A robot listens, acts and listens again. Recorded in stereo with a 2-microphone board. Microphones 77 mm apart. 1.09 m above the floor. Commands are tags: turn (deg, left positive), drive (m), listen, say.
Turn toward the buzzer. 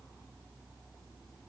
<listen/>
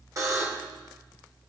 <turn deg="-45"/>
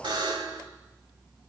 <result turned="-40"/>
<turn deg="-95"/>
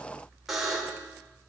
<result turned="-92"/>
<say>Facing the buzzer, 2 to 4 m away.</say>